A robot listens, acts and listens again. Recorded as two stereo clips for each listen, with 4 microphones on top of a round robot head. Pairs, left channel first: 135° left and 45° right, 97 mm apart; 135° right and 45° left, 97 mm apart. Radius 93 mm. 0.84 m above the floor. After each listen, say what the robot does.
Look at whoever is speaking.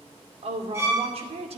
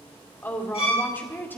Turn 65° right.
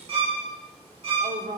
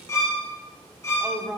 Turn 30° right.
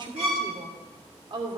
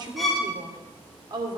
Facing the woman speaking, 2 to 4 m away.